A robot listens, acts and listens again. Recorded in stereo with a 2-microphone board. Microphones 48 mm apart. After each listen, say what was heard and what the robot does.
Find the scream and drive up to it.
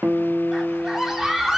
Turn 30° right.
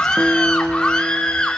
So it is at 20° left. Turn 20° left.
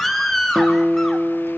Drive 1.0 m forward.
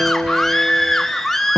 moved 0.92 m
Drive 1.0 m forward.
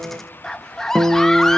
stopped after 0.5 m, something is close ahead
The scream is now 10° left. Turn 10° left.
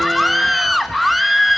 Arrived at the scream, straight ahead.